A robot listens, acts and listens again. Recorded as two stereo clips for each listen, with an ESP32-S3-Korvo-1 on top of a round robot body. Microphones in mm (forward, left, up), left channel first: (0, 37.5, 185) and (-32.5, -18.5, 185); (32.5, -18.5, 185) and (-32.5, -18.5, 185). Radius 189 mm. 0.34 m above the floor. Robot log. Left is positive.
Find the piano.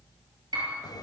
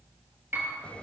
note: The piano: 120° right.
cmd yaw -120
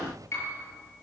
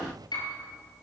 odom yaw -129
note: The piano is now 10° left.
cmd yaw +10
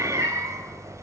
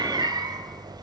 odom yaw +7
cmd idle
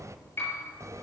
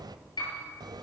end: Found it: a piano, straight ahead, over 4 m away.